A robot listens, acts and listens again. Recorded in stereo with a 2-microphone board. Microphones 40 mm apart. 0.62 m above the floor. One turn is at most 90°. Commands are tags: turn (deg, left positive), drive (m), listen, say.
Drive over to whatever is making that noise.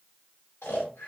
<turn deg="90"/>
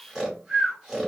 <drive m="1.0"/>
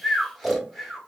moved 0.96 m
<drive m="1.0"/>
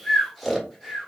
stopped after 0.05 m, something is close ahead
<say>I am next to the snoring.</say>